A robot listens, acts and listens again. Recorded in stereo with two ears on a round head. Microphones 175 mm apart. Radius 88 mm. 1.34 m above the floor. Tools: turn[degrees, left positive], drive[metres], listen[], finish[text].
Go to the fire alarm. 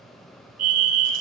Thought: The fire alarm: about 50° right or 130° right.
Action: turn[-50]
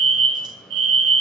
Thought: So it is at 80° right.
Action: turn[-80]
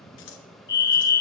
Thought: The fire alarm is now 25° left.
Action: turn[25]
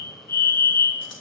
Thought: The fire alarm is now 20° left.
Action: turn[20]
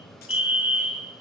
Action: drive[1.0]
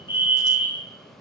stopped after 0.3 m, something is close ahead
Action: finish[Something is in my way. I am facing the fire alarm but have not reached it.]